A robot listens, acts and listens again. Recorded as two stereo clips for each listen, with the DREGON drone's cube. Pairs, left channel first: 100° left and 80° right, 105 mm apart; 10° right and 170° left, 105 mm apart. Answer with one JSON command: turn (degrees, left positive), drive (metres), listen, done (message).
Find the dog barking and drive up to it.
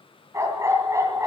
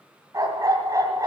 {"turn": -135}
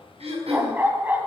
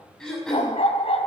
{"drive": 1.0}
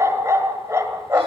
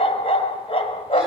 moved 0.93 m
{"turn": -15}
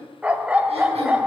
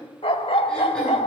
{"drive": 1.0}
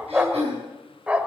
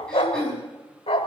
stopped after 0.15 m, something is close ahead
{"done": "I am next to the dog barking."}